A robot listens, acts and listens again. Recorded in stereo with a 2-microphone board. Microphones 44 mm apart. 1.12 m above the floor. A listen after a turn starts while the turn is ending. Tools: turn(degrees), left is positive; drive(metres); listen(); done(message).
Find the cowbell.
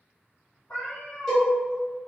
turn(degrees=30)
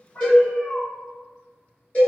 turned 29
turn(degrees=140)
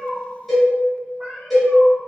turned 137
done("Facing the cowbell, 1 to 2 m away.")